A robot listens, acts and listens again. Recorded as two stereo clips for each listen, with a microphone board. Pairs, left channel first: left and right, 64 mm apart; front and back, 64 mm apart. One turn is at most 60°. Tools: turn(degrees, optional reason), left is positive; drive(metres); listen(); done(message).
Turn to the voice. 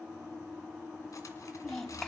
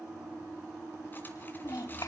turn(degrees=10, reason="The child speaking: 10° left.")
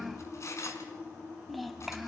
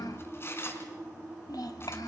done("Found it: a child speaking, straight ahead.")